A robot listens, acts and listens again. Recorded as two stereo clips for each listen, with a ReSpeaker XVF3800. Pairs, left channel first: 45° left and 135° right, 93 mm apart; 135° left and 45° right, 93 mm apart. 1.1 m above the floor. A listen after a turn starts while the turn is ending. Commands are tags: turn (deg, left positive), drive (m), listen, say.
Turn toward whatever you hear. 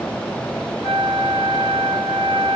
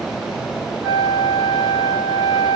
<turn deg="45"/>
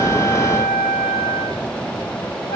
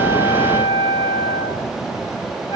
<say>Found it: a flute, straight ahead, 1 to 2 m away.</say>